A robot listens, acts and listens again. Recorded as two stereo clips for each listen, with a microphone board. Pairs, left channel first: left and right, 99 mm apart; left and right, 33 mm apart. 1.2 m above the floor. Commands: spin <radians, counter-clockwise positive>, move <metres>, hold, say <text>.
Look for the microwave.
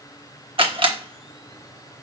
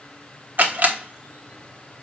hold
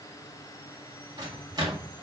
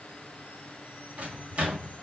spin -0.70
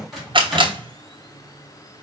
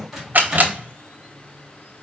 say Found it: a microwave, straight ahead.